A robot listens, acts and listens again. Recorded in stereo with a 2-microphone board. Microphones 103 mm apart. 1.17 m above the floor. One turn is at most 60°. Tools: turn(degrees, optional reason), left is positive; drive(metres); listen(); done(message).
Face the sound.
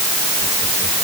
listen()
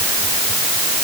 listen()
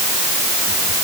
done("I can't make out anything to turn to.")